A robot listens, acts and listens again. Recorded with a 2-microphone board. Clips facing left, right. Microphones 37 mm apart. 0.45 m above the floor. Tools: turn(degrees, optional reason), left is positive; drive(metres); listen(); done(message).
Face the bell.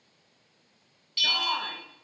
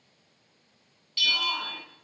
turn(degrees=30)
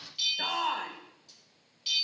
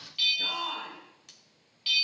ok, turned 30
turn(degrees=-30, reason="So it is at 30° right.")
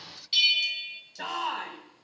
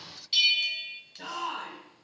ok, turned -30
done("Facing the bell.")